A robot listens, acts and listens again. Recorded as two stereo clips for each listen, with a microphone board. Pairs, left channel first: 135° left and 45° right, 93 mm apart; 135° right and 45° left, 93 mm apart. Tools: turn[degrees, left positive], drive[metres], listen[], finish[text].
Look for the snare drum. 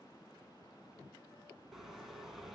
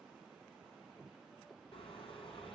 Action: listen[]
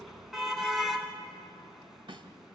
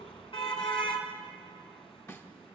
Thought: The snare drum: 75° right.
Action: turn[-75]
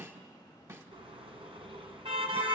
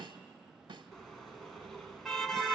Thought: The snare drum is now 10° left.
Action: turn[10]
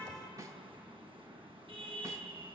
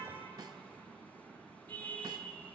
Action: finish[Facing the snare drum, 1 to 2 m away.]